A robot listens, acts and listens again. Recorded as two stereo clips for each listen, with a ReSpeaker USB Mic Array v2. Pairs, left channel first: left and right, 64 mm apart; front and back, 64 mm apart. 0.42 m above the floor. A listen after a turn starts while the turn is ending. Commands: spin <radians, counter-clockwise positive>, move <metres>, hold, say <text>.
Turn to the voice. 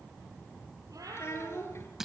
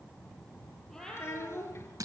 spin 0.79
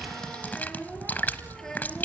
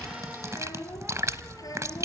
spin 0.17
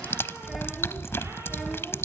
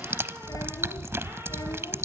hold
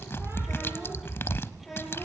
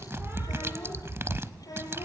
say Facing the child speaking, over 4 m away.